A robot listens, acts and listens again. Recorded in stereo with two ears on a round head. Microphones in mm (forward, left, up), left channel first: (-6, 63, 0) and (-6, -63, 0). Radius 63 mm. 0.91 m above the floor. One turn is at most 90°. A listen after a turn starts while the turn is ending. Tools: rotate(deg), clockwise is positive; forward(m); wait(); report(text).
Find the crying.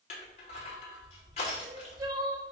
rotate(25)
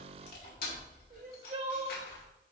rotate(90)
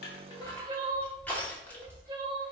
rotate(35)
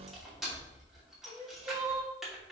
rotate(20)
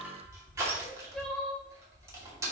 report("Found it: crying, straight ahead.")